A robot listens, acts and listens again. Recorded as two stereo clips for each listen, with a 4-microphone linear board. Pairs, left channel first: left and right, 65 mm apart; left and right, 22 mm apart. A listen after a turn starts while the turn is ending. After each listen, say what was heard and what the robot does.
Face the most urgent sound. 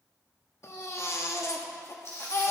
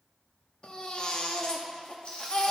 The baby crying: about 45° left or 135° left. Turn 45° left.
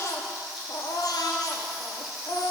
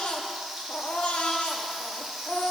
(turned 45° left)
So it is at 85° left. Turn 85° left.
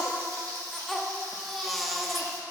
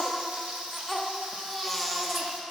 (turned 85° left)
Found it: a baby crying, straight ahead, under 1 m away.